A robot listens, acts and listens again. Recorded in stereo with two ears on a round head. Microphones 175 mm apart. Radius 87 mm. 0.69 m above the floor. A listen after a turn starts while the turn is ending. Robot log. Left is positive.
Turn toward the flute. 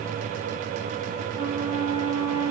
note: The flute: about 15° right or 165° right.
cmd yaw -15
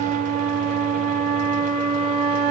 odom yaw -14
note: So it is at 150° right.
cmd yaw -150
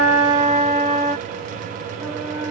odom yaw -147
end: Found it: a flute, straight ahead, 2 to 4 m away.